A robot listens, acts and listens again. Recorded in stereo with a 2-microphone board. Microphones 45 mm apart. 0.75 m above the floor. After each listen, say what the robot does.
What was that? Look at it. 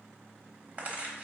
Turn 35° right.
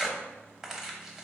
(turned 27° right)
Turn 15° right.
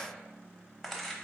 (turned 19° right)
Facing the tearing paper.